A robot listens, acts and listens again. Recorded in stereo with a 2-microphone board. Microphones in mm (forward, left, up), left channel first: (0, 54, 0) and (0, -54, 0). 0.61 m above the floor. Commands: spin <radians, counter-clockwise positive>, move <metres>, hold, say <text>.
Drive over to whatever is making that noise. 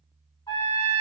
spin 0.79
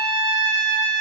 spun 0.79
spin 1.40
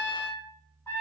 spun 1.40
spin 0.44
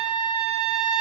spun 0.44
spin 0.35
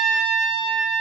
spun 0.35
move 1.0
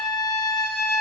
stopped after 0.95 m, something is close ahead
say I am next to the trumpet.